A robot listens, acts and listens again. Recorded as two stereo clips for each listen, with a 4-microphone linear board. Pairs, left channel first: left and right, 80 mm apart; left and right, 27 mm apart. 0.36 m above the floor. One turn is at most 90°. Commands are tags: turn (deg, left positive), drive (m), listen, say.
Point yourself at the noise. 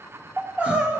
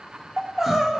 <turn deg="-30"/>
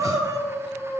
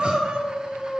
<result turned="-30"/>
<turn deg="-90"/>
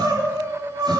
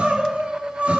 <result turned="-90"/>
<turn deg="-65"/>
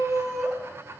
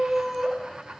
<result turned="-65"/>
<say>Found it: crying, straight ahead, 1 to 2 m away.</say>